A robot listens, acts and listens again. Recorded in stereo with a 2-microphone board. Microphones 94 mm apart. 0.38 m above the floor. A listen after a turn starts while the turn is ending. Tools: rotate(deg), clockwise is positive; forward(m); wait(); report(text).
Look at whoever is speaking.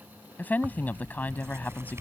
rotate(-20)
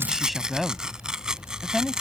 report("Found it: a woman speaking, straight ahead.")